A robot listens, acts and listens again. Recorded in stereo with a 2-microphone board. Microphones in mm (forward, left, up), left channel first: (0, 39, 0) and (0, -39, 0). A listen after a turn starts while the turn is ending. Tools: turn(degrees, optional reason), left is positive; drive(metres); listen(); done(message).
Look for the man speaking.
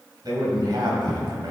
turn(degrees=-60, reason="The man speaking: about 60° right or 120° right.")
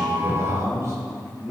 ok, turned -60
turn(degrees=-50, reason="So it is at 50° right.")
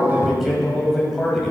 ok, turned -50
done("Facing the man speaking.")